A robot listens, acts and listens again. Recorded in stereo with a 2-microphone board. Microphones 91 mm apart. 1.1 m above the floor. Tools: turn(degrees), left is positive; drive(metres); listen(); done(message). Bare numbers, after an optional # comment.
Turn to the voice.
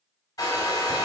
listen()
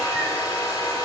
listen()
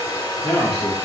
# The man speaking: about 70° right or 110° right.
turn(-70)
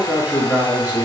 # So it is at 15° right.
turn(-15)
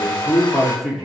done("Facing the man speaking, 1 to 2 m away.")